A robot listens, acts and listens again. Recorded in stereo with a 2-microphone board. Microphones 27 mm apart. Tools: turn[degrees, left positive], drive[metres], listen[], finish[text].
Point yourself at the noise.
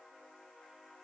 Action: listen[]
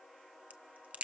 Thought: The crack: about 55° right or 125° right.
Action: turn[-55]
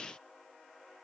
Action: listen[]
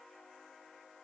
Action: finish[I heard a crack, but can't make it out now. It was about straight ahead or 70° right.]